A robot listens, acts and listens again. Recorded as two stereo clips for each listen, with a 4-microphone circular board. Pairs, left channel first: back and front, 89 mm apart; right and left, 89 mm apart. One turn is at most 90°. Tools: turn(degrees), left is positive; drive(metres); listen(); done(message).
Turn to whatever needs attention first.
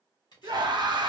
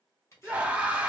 turn(degrees=15)
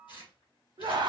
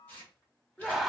done("Found it: a scream, straight ahead, under 1 m away.")